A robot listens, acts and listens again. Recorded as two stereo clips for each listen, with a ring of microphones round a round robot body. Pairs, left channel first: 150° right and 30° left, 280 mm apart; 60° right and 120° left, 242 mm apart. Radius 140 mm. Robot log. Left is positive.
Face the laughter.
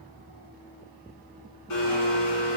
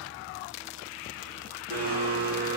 cmd idle
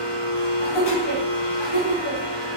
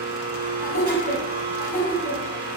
note: The laughter: 130° right.
cmd yaw -130
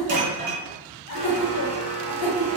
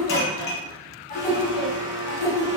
note: The laughter is now 10° right.
cmd yaw -10
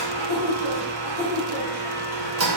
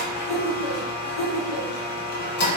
end: Facing the laughter, 2 to 4 m away.